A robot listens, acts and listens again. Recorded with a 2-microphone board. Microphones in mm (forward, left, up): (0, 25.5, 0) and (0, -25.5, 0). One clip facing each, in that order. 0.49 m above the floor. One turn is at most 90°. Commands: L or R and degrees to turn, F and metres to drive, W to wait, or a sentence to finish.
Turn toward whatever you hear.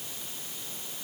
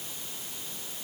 W
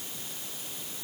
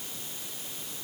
W
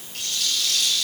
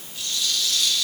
L70
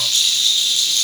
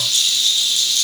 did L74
L35
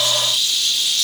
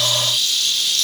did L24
L15
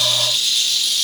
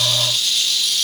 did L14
Found it: a rattle, straight ahead, over 4 m away.